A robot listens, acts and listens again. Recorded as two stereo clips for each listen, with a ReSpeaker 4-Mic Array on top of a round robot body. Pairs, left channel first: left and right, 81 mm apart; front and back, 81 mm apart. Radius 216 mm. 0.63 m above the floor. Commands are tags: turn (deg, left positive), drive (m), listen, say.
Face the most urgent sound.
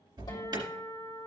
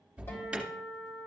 <turn deg="-105"/>
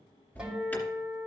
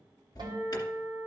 <turn deg="30"/>
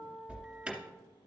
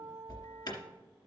<turn deg="-10"/>
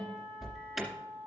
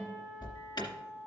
<say>Facing the alarm.</say>